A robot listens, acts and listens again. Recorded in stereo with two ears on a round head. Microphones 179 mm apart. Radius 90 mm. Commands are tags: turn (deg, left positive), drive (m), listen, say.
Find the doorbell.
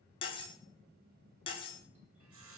<listen/>
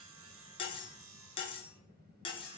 <listen/>
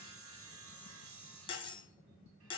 <say>I can't make out a doorbell, only cutlery clinking and sawing.</say>